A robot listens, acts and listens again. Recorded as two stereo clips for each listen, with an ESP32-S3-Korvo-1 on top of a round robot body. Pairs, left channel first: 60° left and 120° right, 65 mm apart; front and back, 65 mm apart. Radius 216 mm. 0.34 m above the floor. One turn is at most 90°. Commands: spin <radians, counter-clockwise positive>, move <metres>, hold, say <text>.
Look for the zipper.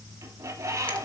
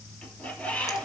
hold
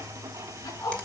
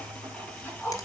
spin 1.05
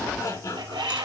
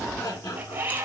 spin 0.26
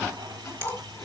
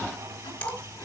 say Facing the zipper, over 4 m away.